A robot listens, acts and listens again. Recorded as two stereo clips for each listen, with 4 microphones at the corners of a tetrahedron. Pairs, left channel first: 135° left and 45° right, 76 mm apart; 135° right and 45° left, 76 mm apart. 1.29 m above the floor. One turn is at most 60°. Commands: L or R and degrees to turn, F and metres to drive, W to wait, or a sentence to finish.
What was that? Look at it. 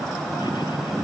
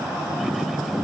W
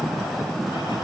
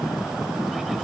W
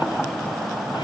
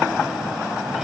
I can't make out anything to turn to.